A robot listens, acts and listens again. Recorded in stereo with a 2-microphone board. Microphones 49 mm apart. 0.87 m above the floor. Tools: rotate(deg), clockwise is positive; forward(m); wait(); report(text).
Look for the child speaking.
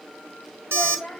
rotate(-15)
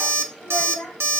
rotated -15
report("Facing the child speaking.")